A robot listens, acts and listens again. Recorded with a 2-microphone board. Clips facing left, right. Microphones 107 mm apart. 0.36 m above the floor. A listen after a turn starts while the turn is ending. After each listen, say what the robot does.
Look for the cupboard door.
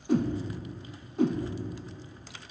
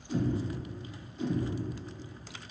Turn 40° right.
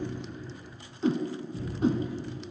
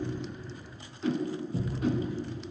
Turn 100° right.
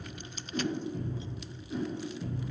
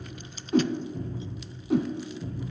Found it: a cupboard door, straight ahead, over 4 m away.